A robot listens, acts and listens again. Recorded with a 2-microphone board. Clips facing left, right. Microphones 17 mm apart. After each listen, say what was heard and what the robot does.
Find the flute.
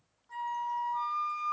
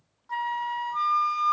The flute: about 40° right or 140° right. Turn 40° right.
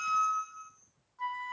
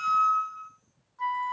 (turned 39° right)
Found it: a flute, straight ahead.